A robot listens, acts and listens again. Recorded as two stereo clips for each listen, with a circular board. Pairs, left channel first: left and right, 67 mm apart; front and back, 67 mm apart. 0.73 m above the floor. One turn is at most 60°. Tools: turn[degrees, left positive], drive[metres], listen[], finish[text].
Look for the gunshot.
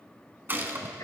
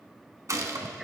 Thought: The gunshot: 145° right.
Action: turn[-60]
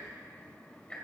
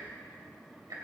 Thought: Nothing new. It was at 85° right.
Action: turn[-60]
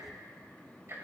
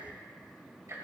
Thought: Nothing new. It was at 25° right.
Action: turn[-25]
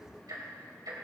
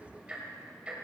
Action: finish[I heard a gunshot from this way, but can't make it out now.]